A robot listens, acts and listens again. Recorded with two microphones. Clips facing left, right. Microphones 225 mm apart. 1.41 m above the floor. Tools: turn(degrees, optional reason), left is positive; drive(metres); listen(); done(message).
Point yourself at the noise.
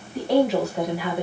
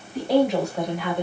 turn(degrees=30)
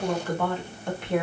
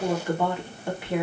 turn(degrees=-30)
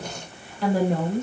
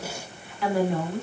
turn(degrees=45, reason="So it is at 45° left.")
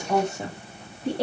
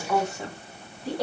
turn(degrees=30, reason="The woman speaking is now 30° left.")
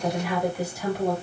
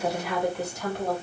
done("Found it: a woman speaking, straight ahead, 2 to 4 m away.")